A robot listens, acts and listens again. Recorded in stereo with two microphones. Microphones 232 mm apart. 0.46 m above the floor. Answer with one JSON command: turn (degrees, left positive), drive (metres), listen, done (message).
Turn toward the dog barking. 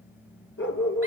{"turn": 60}
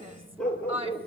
{"done": "Facing the dog barking, 2 to 4 m away."}